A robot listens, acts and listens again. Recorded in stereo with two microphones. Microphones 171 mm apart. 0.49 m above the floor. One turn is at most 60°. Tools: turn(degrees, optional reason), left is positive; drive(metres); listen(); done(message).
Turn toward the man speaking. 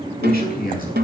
turn(degrees=55, reason="The man speaking: about 55° left or 125° left.")
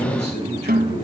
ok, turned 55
turn(degrees=60, reason="So it is at 70° left.")
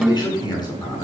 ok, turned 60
turn(degrees=25, reason="The man speaking is now 25° left.")
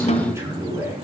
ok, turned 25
turn(degrees=-15, reason="The man speaking is now 15° right.")
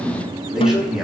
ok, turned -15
done("Facing the man speaking.")